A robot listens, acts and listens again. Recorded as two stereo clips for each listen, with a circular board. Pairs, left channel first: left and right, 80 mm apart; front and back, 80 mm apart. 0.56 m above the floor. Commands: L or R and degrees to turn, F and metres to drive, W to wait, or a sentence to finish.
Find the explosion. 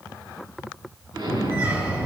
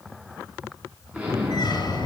R105
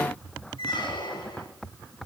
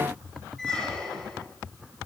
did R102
I heard an explosion from this way, but can't make it out now.